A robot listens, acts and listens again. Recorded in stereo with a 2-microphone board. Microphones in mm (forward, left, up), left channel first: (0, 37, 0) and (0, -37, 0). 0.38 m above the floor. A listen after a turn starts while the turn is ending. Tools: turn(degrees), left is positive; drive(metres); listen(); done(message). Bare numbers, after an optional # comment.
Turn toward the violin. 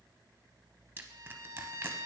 # The violin: about 60° right or 120° right.
turn(-60)
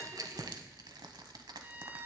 # So it is at 35° right.
turn(-35)
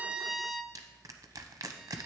done("Facing the violin.")